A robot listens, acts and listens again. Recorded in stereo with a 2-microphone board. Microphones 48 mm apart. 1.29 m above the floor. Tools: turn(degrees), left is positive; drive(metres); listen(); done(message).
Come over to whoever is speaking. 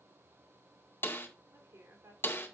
turn(degrees=-90)
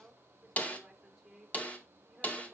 drive(metres=1.0)
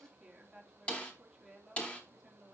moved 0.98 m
turn(degrees=-10)
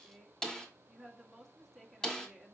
drive(metres=1.0)
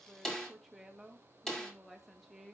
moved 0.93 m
drive(metres=1.0)
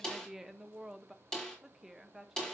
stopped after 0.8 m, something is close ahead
turn(degrees=-10)
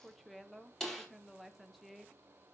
done("I am next to the woman speaking.")